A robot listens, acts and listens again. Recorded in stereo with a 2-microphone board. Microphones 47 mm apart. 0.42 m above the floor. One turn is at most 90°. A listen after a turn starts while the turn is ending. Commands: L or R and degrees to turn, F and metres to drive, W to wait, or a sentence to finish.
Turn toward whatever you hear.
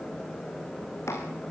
L65
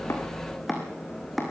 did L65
Found it: chopping, straight ahead, over 4 m away.